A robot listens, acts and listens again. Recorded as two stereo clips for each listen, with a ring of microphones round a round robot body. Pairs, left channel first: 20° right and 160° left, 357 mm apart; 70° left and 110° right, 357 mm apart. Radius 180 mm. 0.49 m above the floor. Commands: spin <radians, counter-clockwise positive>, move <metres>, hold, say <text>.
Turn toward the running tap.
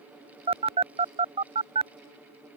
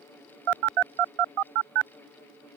hold
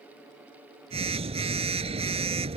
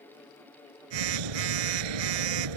hold
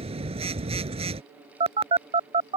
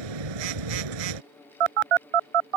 say I can't make out a running tap, only a phone buzzing.